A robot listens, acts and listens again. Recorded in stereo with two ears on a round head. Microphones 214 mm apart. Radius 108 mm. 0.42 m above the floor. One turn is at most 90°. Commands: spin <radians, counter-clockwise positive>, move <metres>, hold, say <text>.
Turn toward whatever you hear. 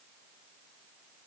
hold
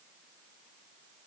hold
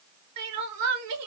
spin -1.31
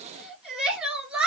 say Found it: crying, straight ahead.